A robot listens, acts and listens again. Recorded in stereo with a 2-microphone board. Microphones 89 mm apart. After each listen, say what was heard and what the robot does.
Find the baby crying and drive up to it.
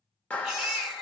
Turn 30° right.
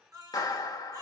So it is at 145° right. Turn 145° right.
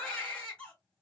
The baby crying is now 10° left. Turn 10° left.
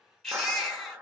Drive 1.0 m forward.
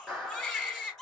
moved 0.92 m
Drive 1.0 m forward.
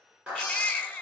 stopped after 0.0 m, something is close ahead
The baby crying is now 10° left. Turn 10° left.
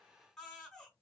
Arrived at the baby crying, straight ahead.